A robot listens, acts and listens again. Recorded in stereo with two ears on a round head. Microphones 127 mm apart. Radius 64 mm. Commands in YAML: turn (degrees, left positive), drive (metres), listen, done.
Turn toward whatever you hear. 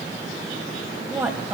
turn: -30
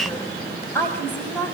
turn: 15
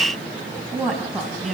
done: "Facing the woman speaking, 2 to 4 m away."